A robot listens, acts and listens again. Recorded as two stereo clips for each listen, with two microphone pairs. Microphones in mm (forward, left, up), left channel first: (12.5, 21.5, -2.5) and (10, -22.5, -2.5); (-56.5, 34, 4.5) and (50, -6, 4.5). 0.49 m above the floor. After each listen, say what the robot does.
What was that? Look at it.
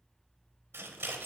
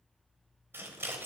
Turn 90° right.
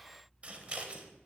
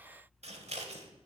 Turn 35° right.
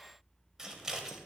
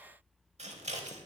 Turn 15° right.
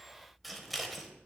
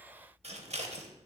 Found it: scissors, straight ahead, under 1 m away.